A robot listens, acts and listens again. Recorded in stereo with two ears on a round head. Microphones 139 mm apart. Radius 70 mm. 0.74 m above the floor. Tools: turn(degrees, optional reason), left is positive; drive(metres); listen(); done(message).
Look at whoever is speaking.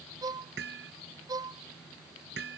listen()
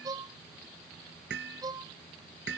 listen()
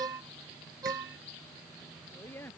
turn(degrees=30)
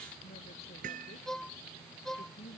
turn(degrees=140, reason="So it is at 140° left.")
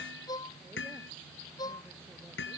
listen()
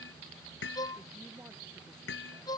listen()
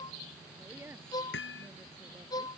turn(degrees=-15, reason="The woman speaking is now 15° right.")
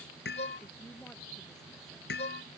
listen()
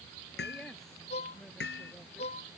listen()
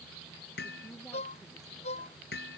done("Facing where the woman speaking came from. I can't hear it now.")